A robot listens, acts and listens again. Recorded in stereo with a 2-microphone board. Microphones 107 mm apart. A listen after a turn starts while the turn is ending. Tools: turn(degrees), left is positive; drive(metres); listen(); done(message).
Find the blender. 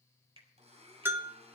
turn(degrees=-90)
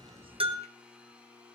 turn(degrees=-10)
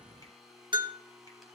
done("Facing the blender, 2 to 4 m away.")